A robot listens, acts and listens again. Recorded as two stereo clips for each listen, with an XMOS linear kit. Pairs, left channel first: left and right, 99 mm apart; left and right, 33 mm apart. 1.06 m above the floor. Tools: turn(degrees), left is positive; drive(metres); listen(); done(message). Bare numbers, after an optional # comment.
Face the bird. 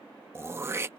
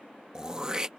listen()
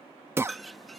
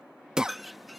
turn(30)
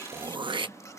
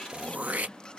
# So it is at 150° left.
turn(150)
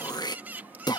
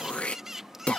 # The bird is now 15° right.
turn(-15)
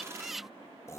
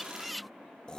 done("Found it: a bird, straight ahead.")